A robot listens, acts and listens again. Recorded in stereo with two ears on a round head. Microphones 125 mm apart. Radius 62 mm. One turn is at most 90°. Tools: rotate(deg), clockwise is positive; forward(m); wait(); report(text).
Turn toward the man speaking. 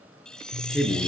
rotate(-30)
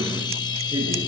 wait()
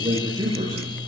rotate(30)
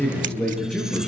rotate(-10)
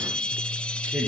report("Found it: a man speaking, straight ahead, over 4 m away.")